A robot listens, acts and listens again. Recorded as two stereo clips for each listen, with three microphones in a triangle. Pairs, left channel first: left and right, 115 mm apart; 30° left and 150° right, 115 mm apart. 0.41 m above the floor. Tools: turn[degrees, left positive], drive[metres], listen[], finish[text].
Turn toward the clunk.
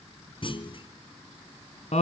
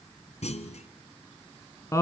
Thought: The clunk: 50° left.
Action: turn[50]
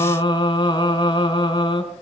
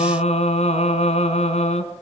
Action: finish[I heard a clunk from this way, but can't make it out now.]